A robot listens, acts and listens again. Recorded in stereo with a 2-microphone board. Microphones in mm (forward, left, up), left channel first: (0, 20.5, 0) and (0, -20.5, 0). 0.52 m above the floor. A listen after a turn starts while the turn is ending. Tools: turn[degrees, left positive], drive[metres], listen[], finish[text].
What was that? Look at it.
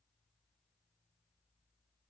Action: listen[]
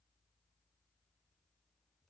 Action: listen[]
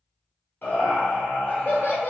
Thought: The laughter: about 45° left or 135° left.
Action: turn[45]
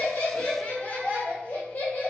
Thought: So it is at 80° left.
Action: turn[80]
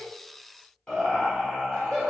Thought: The laughter is now 30° left.
Action: turn[30]
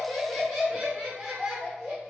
Action: finish[Facing the laughter, 1 to 2 m away.]